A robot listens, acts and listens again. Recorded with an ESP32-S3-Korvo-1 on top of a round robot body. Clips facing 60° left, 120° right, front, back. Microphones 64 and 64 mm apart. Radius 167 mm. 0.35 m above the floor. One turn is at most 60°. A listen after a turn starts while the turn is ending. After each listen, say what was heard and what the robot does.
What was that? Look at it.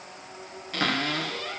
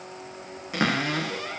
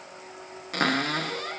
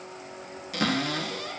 The cupboard door: 45° right. Turn 45° right.
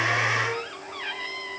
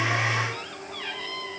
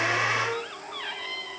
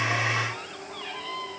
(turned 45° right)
Found it: a cupboard door, straight ahead.